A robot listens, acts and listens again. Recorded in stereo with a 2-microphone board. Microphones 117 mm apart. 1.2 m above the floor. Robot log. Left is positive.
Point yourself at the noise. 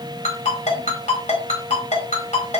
cmd yaw +90
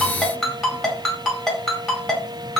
end: Found it: a ringtone, straight ahead.